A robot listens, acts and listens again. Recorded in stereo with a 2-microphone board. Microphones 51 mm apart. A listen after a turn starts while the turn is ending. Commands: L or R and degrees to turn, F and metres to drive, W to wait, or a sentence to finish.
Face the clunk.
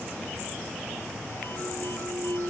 R35
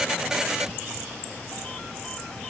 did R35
W
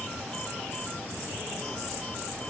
I heard a clunk, but can't make it out now. It was about straight ahead or 110° right.